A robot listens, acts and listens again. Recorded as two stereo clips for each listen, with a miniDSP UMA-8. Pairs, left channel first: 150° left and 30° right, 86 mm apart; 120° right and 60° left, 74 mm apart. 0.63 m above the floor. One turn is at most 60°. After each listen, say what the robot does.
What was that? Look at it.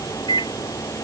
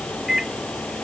Turn 60° left.
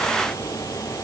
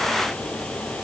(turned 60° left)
Turn 60° left.
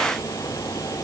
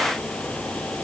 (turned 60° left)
Turn 25° left.
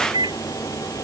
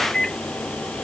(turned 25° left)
Turn 40° right.
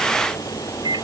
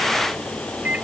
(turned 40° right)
Turn 10° right.
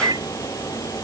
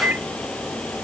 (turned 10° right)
Found it: a microwave, straight ahead.